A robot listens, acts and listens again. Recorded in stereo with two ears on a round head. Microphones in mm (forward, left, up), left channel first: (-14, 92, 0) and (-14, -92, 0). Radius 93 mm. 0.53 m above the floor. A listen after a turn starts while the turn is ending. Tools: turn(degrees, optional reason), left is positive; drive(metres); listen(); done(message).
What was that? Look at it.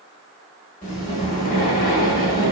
turn(degrees=40, reason="The breathing: about 40° left or 140° left.")
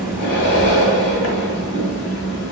turn(degrees=100, reason="So it is at 100° left.")
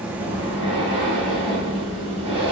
turn(degrees=-25, reason="The breathing is now 25° right.")
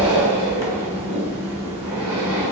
turn(degrees=-15, reason="The breathing is now 15° right.")
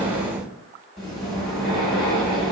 done("Found it: breathing, straight ahead, 1 to 2 m away.")